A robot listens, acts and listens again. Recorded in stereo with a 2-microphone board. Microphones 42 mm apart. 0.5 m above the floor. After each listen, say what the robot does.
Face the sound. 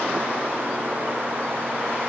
Keep listening.
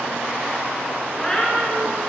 Turn 20° left.
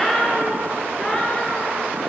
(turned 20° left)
Turn 25° left.
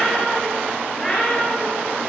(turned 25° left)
Turn 30° left.
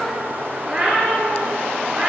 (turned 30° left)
Turn 15° right.
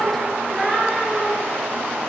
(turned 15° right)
Facing the cat meowing, 2 to 4 m away.